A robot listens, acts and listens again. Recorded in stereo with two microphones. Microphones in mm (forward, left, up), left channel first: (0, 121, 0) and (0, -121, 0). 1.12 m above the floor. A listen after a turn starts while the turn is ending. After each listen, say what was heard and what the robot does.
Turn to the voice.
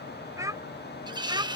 The child speaking: about 20° right or 160° right. Turn 20° right.
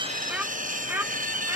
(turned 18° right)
Turn 30° right.
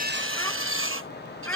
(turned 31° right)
So it is at 10° left. Turn 10° left.
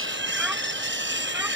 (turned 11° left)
Keep listening.
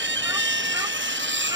Keep listening.
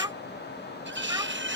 The child speaking is now 15° right. Turn 15° right.
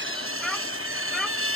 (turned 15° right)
Keep listening.
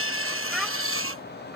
Facing the child speaking.